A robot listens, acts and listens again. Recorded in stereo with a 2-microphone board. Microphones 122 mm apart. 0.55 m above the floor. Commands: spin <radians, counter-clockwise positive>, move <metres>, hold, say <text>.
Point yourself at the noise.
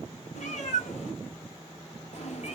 spin 1.13
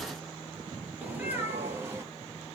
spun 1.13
spin -0.35
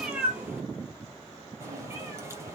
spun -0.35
spin -0.35
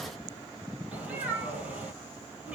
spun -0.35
spin -0.17
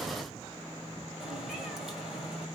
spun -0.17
say Facing the cat meowing.